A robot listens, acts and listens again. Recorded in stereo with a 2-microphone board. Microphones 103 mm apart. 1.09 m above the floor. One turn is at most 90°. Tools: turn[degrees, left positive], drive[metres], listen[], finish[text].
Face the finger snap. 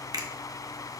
Thought: The finger snap: about 35° right or 145° right.
Action: turn[-35]
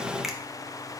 Action: listen[]
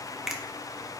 Action: finish[Facing the finger snap, under 1 m away.]